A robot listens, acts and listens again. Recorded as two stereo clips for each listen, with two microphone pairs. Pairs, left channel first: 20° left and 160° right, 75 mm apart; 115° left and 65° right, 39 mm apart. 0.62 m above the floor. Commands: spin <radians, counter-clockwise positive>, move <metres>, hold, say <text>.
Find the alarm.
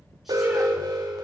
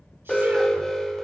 spin -2.97
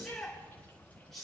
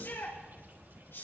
hold
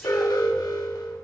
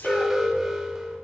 spin 0.17
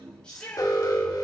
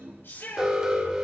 say Found it: an alarm, straight ahead, 2 to 4 m away.